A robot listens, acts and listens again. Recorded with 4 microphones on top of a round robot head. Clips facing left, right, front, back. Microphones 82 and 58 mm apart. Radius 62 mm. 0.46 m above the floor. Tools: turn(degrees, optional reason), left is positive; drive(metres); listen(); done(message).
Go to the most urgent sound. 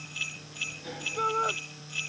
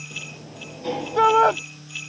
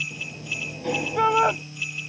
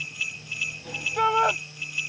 turn(degrees=-85, reason="The shout: 85° right.")
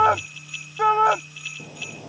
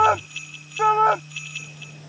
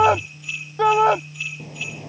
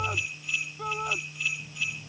drive(metres=1.0)
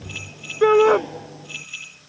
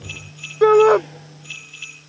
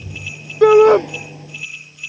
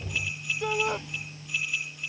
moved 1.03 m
turn(degrees=-10, reason="The shout is now 10° right.")
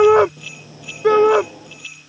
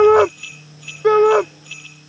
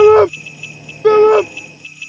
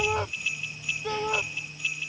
drive(metres=1.0)
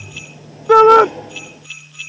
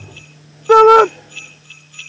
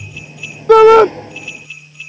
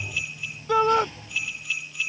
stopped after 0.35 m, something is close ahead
done("I am next to the shout.")